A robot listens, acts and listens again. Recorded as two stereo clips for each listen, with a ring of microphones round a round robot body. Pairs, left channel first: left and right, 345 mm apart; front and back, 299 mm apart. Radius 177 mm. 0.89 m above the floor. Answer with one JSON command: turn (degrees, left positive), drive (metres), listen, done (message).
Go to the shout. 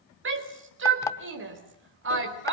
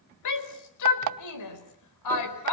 {"turn": -35}
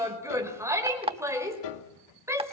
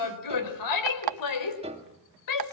{"turn": -10}
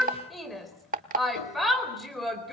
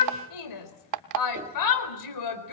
{"drive": 1.0}
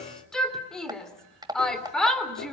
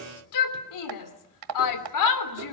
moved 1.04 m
{"drive": 1.0}
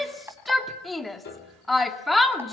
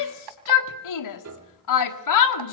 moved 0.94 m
{"drive": 1.0}
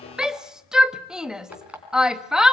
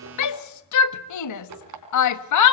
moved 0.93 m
{"drive": 1.0}
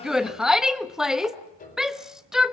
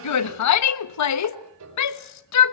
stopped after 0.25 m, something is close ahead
{"done": "I am next to the shout."}